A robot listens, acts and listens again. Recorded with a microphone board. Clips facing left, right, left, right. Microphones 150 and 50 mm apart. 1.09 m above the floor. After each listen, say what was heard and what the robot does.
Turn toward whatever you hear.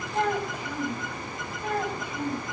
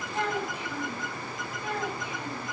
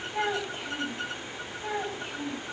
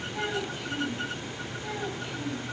The child speaking: about 40° left or 140° left. Turn 40° left.
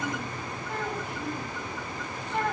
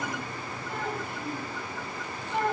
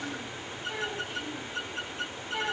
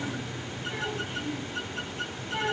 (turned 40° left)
Facing the child speaking, over 4 m away.